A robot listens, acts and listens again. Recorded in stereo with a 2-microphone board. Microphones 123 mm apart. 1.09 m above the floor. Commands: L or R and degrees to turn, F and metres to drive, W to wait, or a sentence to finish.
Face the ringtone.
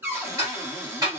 W
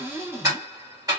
W
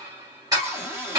I can't make out a ringtone to turn to.